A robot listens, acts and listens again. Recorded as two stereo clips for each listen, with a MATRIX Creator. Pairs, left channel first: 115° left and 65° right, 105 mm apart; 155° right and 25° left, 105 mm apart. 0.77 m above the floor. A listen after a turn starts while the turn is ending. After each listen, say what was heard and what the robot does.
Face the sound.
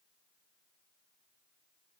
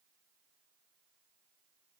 Keep listening.
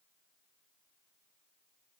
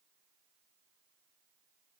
Keep listening.
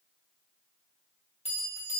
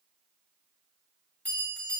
The bell: 125° left. Turn 125° left.
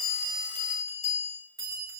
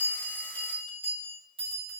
The bell is now 10° right. Turn 10° right.
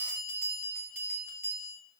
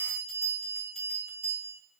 Found it: a bell, straight ahead.